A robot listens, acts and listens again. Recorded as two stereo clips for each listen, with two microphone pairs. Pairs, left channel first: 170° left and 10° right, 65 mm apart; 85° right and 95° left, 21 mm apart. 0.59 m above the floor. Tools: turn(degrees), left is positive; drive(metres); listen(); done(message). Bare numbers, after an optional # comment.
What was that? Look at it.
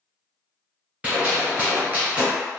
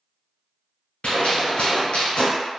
# The gunshot: 75° right.
turn(-75)
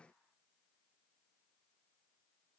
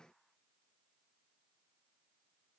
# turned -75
done("Facing where the gunshot came from. I can't hear it now.")